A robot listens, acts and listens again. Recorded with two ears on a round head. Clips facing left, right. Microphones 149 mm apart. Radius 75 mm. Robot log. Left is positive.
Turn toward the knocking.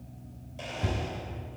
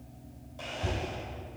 cmd yaw +90
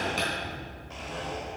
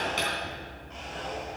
end: Facing the knocking, 2 to 4 m away.